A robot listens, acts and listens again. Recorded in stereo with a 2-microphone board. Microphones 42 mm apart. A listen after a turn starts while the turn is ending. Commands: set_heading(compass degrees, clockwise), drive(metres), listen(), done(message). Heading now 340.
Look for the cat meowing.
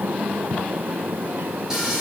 listen()
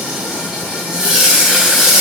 listen()
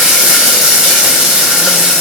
done("I can't make out a cat meowing to turn to.")